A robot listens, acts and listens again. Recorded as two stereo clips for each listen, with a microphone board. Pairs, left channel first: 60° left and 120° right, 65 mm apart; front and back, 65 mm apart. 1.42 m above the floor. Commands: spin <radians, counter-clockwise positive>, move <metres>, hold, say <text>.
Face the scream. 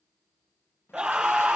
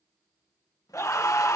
spin -0.79
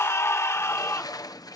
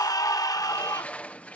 spin 0.26
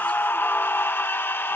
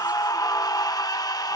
say Facing the scream.